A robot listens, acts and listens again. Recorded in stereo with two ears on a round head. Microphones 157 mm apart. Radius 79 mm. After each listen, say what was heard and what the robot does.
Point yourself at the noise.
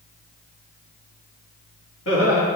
Turn 90° left.
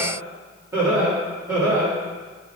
So it is at 15° right. Turn 15° right.
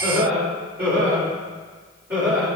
The laughter is now 15° right. Turn 15° right.
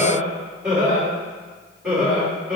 Found it: laughter, straight ahead, over 4 m away.